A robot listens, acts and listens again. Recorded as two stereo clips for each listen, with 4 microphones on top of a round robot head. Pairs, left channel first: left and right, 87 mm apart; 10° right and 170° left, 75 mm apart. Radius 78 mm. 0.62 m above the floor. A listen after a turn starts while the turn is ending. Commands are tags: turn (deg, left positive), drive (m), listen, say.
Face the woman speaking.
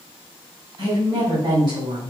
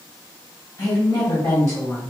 <turn deg="-65"/>
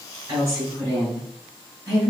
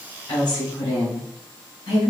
<turn deg="-30"/>
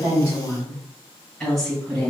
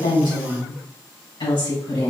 <say>Facing the woman speaking.</say>